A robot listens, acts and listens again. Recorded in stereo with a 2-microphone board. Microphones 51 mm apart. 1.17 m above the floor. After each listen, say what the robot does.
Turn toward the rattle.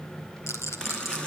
Turn 75° left.
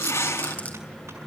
Turn 30° left.
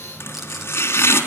Keep listening.
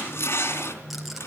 Keep listening.
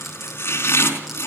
I heard a rattle from this way, but can't make it out now.